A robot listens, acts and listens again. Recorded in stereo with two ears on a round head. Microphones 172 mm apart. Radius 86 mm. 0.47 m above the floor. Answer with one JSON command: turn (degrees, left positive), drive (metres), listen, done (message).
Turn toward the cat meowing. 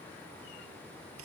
{"listen": true}
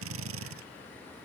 {"listen": true}
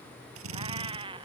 {"turn": -25}
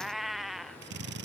{"done": "Facing the cat meowing."}